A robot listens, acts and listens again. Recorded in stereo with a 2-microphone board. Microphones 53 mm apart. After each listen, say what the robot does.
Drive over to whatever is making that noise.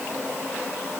Keep listening.
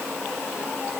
Keep listening.
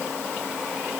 I can't make out anything to turn to.